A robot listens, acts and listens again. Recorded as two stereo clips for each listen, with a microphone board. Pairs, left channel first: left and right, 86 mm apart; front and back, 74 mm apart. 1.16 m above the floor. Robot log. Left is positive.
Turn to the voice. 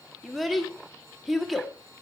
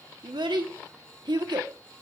note: The child speaking: straight behind.
cmd yaw +180
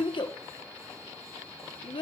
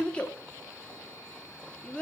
note: The child speaking is now 75° left.
cmd yaw +75
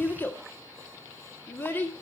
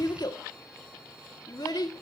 note: The child speaking is now 25° left.
cmd yaw +25
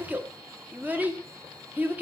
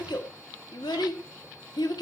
note: The child speaking is now 20° right.
cmd yaw -20
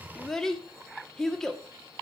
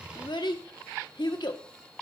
end: Facing the child speaking, 1 to 2 m away.